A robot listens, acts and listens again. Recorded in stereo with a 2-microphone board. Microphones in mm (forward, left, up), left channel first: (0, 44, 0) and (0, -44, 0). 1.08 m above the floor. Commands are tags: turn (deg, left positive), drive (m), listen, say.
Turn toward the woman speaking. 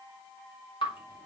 <listen/>
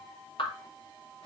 <listen/>
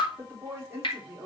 <turn deg="-30"/>
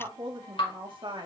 <turn deg="-120"/>
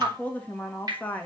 <turn deg="15"/>
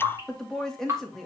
<say>Found it: a woman speaking, straight ahead.</say>